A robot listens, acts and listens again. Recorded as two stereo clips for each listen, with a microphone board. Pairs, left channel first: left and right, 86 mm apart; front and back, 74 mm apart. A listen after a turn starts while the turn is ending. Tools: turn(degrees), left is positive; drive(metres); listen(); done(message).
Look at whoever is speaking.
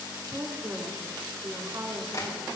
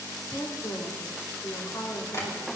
turn(degrees=-40)
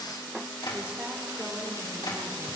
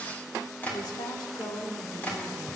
listen()
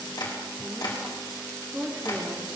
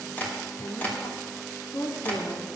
turn(degrees=-20)
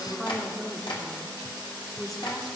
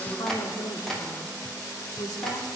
done("Found it: a woman speaking, straight ahead, 2 to 4 m away.")